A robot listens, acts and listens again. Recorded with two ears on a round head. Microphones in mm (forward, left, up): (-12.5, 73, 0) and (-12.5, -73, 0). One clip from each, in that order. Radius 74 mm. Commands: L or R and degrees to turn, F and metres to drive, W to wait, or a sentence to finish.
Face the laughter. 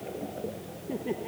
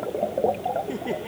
R90
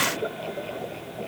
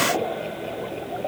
W
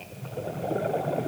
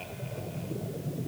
W
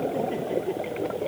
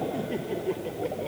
Facing the laughter.